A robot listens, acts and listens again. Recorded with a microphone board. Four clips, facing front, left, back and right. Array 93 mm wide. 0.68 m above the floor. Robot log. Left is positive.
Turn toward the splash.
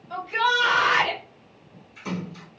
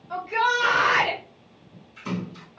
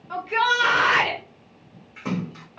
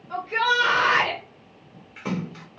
note: The splash: 120° right.
cmd yaw -120
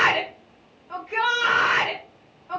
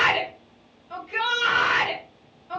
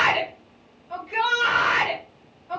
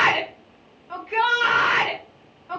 end: Facing where the splash came from. I can't hear it now.